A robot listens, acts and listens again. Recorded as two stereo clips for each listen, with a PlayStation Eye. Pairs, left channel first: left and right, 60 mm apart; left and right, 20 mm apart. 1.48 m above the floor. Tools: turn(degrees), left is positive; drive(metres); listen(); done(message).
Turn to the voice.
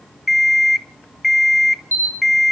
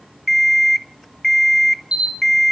listen()
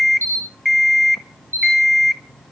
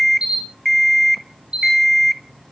listen()
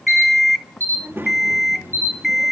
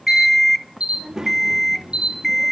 turn(degrees=-35)
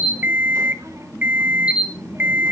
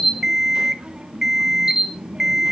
turn(degrees=-100)
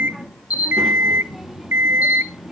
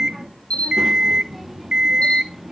done("Found it: a child speaking, straight ahead.")